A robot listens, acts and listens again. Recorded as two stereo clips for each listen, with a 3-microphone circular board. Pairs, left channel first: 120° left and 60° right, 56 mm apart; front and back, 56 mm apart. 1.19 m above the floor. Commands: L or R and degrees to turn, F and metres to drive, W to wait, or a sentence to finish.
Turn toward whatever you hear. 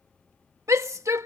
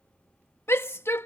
R40
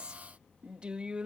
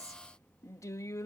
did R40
L10
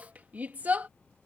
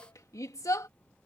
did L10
Facing the shout.